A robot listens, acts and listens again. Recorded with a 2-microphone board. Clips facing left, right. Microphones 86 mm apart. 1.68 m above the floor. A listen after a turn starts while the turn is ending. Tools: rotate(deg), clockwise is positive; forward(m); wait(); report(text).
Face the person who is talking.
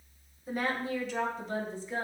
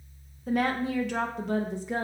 rotate(60)
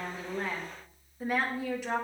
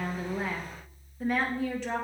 rotate(-10)
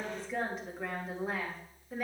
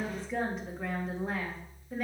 report("Facing the woman speaking, 2 to 4 m away.")